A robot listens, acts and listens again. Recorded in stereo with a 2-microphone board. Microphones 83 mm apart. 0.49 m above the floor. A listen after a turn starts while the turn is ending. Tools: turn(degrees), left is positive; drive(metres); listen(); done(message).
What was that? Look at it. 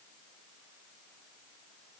listen()
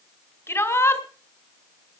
turn(degrees=35)
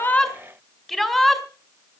done("Facing the shout, 2 to 4 m away.")